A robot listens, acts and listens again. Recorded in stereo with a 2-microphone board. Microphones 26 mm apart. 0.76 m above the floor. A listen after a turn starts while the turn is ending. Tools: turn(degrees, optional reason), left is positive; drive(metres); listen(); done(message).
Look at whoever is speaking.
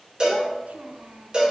turn(degrees=-90)
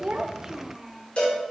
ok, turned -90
turn(degrees=-15, reason="So it is at 15° right.")
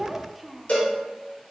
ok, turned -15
done("Found it: a child speaking, straight ahead.")